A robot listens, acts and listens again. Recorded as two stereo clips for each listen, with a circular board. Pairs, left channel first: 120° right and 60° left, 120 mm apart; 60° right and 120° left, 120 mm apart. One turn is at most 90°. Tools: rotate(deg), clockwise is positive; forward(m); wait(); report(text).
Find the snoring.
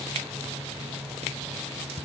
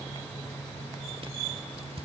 wait()
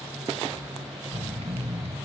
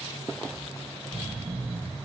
rotate(-90)
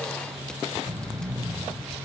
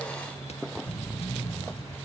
report("Facing the snoring.")